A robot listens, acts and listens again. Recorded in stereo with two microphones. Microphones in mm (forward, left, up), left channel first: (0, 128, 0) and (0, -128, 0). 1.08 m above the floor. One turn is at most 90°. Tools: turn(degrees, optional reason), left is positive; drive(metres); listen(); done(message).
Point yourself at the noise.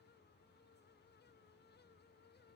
listen()
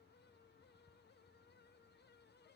listen()
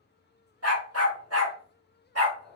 turn(degrees=-70, reason="The dog barking: about 70° right or 110° right.")
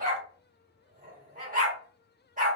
turn(degrees=-30, reason="So it is at 30° right.")
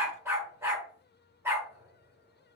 turn(degrees=-10, reason="The dog barking is now 10° right.")
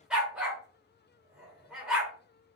done("Found it: a dog barking, straight ahead, 1 to 2 m away.")